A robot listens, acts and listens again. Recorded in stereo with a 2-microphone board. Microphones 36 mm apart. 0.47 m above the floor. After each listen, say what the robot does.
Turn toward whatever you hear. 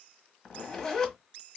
Turn 30° left.
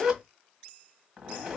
Turn 20° right.
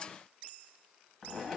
Found it: a zipper, straight ahead, 1 to 2 m away.